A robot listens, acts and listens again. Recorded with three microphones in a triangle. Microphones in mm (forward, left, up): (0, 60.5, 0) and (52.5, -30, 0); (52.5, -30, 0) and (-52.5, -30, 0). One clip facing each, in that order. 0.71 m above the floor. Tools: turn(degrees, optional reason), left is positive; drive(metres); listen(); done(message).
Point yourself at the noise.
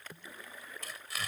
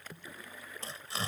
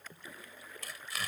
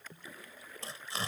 turn(degrees=-120, reason="The tearing paper: 120° right.")
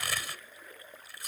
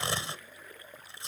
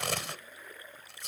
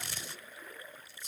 done("Facing the tearing paper.")